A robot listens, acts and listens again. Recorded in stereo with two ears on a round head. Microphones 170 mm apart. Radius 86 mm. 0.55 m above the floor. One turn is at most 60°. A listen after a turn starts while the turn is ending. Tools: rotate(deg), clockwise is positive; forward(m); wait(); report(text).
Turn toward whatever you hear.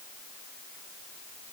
wait()
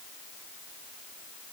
wait()
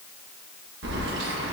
rotate(60)
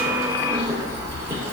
rotate(15)
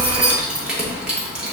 report("Found it: keys jangling, straight ahead, under 1 m away.")